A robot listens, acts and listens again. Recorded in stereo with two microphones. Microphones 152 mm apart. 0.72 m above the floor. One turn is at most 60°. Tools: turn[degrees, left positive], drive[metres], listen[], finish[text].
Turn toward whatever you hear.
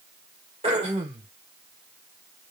Thought: The throat clearing: about 40° right or 140° right.
Action: turn[-40]
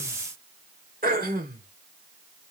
Thought: So it is at 95° right.
Action: turn[-60]
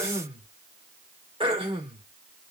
Thought: The throat clearing is now 40° right.
Action: turn[-40]
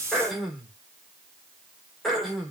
Action: finish[Found it: throat clearing, straight ahead.]